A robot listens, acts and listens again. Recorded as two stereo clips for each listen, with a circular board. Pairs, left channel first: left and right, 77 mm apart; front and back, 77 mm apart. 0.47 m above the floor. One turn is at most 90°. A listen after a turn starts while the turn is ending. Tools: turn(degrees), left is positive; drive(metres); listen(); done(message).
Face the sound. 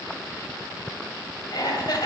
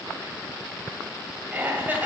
turn(degrees=90)
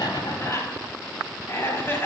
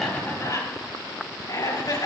turn(degrees=30)
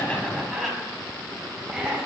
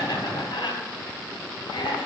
turn(degrees=-10)
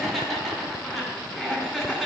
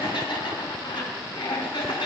done("Facing the laughter, 2 to 4 m away.")